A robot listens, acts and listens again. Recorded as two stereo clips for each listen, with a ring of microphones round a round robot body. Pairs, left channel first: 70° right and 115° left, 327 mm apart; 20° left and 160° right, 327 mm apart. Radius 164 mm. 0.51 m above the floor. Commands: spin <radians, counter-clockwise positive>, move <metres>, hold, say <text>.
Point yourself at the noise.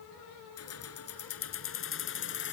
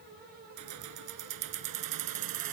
spin -2.18
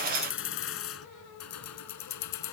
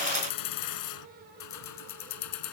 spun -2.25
spin -0.44
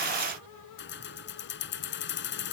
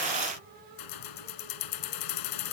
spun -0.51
spin -0.17
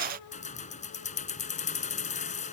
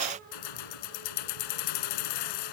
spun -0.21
say Found it: keys jangling, straight ahead.